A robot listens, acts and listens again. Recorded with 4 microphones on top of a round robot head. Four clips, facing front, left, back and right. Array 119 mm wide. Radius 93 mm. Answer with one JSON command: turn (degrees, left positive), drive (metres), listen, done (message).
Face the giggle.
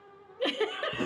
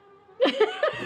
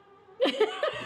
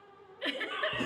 {"turn": 105}
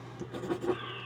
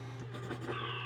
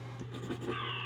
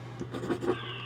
{"listen": true}
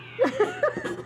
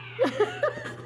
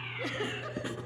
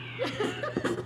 {"turn": 30}
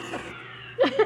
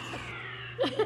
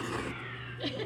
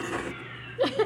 {"turn": -10}
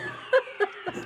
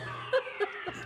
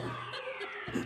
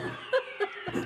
{"done": "Found it: a giggle, straight ahead."}